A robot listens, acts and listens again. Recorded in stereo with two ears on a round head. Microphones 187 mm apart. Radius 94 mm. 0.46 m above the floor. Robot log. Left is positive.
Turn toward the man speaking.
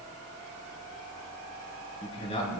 note: The man speaking: about 30° left or 150° left.
cmd yaw +30
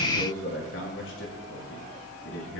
note: So it is at 110° left.
cmd yaw +110
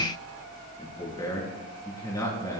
note: The man speaking is now 15° left.
cmd yaw +15
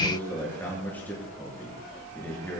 note: The man speaking is now 10° left.
cmd yaw +10
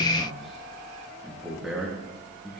end: Found it: a man speaking, straight ahead, over 4 m away.